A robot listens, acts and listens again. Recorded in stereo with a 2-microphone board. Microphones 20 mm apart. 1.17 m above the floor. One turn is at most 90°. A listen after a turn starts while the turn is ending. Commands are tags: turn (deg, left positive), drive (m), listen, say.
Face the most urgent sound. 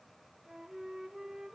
<listen/>
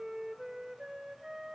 <listen/>
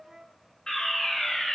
<turn deg="30"/>
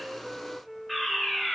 <say>Found it: a fire alarm, straight ahead, over 4 m away.</say>